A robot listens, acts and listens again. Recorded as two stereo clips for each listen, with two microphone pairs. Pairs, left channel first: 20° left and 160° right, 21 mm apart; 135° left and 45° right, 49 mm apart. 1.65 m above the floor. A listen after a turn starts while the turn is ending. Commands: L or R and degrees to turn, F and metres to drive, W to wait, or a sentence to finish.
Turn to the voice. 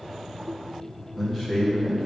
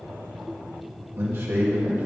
R75
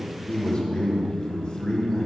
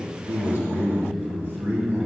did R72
Facing the man speaking, 1 to 2 m away.